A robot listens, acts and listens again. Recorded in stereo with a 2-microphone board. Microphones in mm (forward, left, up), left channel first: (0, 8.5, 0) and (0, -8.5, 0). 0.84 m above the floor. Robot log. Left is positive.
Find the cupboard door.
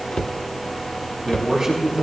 note: The cupboard door: about 60° left or 120° left.
cmd yaw +60
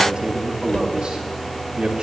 note: So it is at 55° left.
cmd yaw +55
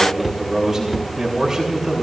note: The cupboard door is now 15° right.
cmd yaw -15
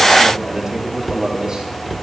end: Facing the cupboard door.